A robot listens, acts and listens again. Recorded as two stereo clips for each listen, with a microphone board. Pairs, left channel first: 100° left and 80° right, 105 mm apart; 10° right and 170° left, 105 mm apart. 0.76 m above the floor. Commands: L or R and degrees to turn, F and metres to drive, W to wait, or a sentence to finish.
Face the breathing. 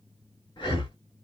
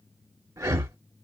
L120
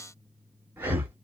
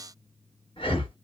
R15
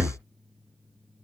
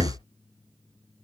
Facing the breathing.